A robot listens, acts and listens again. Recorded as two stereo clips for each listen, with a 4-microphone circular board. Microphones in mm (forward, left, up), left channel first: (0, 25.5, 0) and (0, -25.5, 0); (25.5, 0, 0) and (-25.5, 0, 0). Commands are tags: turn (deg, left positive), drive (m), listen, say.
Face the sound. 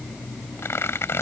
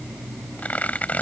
<turn deg="55"/>
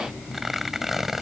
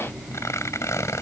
<say>Facing the tearing paper.</say>